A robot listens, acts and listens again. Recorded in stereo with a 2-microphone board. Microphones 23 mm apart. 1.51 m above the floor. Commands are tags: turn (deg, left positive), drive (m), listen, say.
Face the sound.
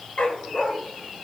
<turn deg="60"/>
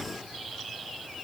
<listen/>
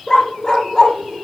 <turn deg="25"/>
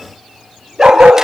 <turn deg="-25"/>
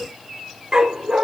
<turn deg="-35"/>
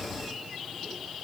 <listen/>
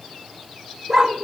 <turn deg="-25"/>
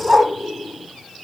<turn deg="-15"/>
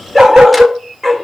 <say>Found it: a dog barking, straight ahead, 2 to 4 m away.</say>